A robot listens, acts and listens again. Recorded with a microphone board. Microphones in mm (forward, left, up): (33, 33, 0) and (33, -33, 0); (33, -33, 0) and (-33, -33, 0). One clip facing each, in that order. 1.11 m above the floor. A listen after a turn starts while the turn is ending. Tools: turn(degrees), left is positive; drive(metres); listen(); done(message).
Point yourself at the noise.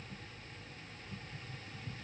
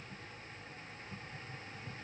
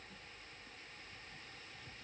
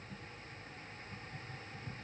listen()
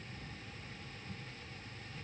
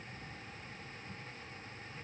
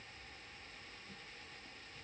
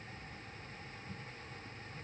listen()
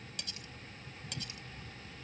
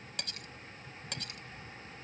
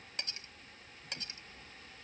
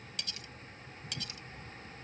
turn(degrees=-60)
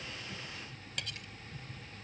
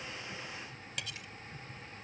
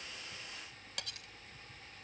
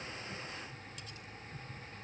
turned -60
done("Facing the cutlery clinking.")